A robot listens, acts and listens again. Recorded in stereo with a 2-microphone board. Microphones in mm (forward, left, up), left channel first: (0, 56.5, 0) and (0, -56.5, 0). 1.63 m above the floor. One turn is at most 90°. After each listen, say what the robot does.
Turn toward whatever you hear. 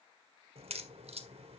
Turn 70° right.
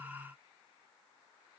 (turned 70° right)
Keep listening.
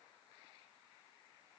I heard a crack, but can't make it out now. It was about straight ahead or 40° right.